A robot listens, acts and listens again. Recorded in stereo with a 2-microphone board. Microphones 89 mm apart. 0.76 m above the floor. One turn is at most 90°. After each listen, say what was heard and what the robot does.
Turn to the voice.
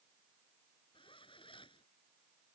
Keep listening.
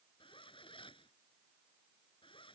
Keep listening.
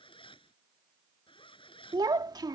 The child speaking: about 50° right or 130° right. Turn 50° right.
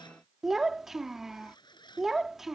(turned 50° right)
Facing the child speaking.